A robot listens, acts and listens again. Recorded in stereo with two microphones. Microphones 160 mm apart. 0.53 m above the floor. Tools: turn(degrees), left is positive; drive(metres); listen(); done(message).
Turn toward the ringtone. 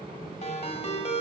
turn(degrees=45)
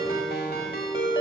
turn(degrees=95)
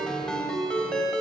done("Found it: a ringtone, straight ahead, 1 to 2 m away.")